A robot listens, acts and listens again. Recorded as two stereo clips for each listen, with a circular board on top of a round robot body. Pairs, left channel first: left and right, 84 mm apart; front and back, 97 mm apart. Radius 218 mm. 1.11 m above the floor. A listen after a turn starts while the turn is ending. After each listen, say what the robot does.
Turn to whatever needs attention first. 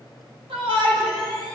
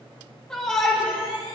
Turn 80° right.
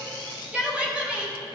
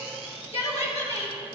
Turn 15° right.
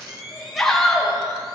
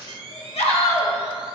Found it: a shout, straight ahead, 2 to 4 m away.